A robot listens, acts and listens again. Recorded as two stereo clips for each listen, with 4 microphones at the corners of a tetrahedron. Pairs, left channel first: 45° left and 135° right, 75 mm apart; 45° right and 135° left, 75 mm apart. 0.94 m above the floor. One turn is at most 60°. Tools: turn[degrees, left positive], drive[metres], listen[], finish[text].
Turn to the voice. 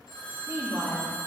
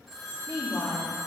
Thought: The woman speaking: 75° right.
Action: turn[-60]
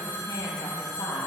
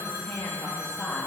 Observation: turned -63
Thought: The woman speaking is now 40° left.
Action: turn[40]
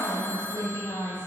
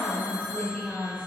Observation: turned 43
Thought: The woman speaking is now 30° left.
Action: turn[30]
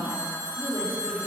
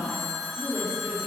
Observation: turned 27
Thought: The woman speaking is now 15° left.
Action: turn[15]
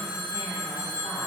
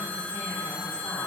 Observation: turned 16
Action: listen[]
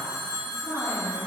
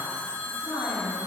Action: finish[Facing the woman speaking.]